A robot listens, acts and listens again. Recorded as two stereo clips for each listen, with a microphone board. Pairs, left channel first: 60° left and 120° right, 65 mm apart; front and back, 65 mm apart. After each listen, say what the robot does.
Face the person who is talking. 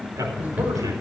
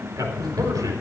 Turn 145° right.
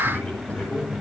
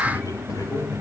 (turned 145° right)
Found it: a man speaking, straight ahead, over 4 m away.